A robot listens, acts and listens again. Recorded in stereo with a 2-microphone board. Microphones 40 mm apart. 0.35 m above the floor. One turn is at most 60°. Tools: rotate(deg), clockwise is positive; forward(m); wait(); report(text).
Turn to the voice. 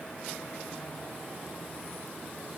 wait()
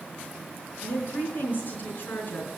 rotate(-50)
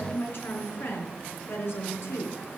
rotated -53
rotate(-60)
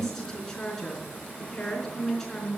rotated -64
rotate(-10)
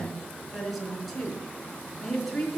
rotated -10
report("Found it: a woman speaking, straight ahead.")